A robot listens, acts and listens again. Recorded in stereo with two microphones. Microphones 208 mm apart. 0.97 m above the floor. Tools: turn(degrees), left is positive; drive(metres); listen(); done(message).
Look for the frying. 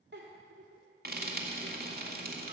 turn(degrees=-50)
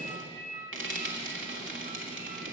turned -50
turn(degrees=-80)
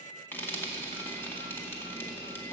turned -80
turn(degrees=10)
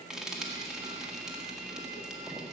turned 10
done("Facing the frying.")